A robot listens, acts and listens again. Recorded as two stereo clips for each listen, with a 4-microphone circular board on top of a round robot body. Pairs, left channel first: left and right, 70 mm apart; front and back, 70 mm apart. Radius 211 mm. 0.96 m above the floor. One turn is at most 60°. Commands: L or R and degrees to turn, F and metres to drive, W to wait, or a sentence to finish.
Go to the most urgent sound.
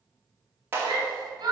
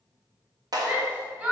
R60
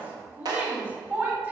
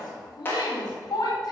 R25
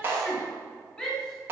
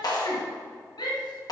L10
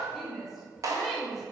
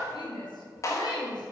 F1.0
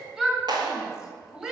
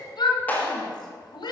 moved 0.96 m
F1.0
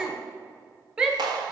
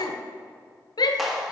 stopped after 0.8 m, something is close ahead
R10
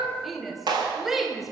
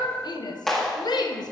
Arrived at the shout, straight ahead.